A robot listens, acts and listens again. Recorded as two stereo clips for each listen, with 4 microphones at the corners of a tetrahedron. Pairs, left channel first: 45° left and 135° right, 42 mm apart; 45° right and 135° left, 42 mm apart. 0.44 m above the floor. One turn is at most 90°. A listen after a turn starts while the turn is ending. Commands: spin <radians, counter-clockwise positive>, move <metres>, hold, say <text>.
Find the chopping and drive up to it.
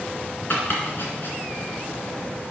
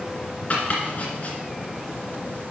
move 1.0
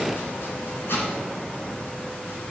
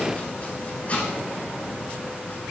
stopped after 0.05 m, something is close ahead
spin 0.17
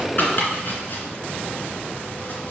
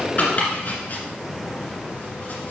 say Something is in my way. I am facing the chopping but have not reached it.